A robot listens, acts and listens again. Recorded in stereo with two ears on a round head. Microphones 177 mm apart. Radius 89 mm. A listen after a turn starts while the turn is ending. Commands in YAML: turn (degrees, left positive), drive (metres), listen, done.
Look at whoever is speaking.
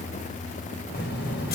turn: 60
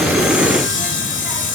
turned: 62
listen: true
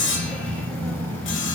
turn: 10
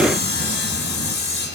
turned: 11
listen: true
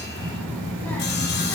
turn: 10
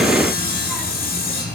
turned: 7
done: "Facing the child speaking, over 4 m away."